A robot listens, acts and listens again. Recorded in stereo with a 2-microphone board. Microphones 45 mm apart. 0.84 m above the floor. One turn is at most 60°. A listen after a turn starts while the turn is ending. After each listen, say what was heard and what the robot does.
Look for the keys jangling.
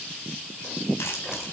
Keep listening.
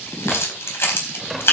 The keys jangling: about 60° left or 120° left. Turn 60° left.
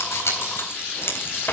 So it is at 70° left. Turn 60° left.
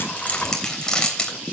The keys jangling is now 20° left. Turn 20° left.
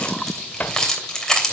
The keys jangling is now 15° left. Turn 15° left.
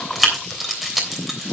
Found it: keys jangling, straight ahead.